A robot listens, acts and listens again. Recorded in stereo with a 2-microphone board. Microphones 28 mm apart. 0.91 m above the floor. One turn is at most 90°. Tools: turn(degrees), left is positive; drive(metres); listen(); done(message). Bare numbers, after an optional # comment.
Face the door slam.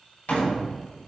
# The door slam: about 65° left or 115° left.
turn(65)
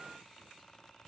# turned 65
listen()
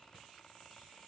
done("I heard a door slam, but can't make it out now. It was about straight ahead or 50° left.")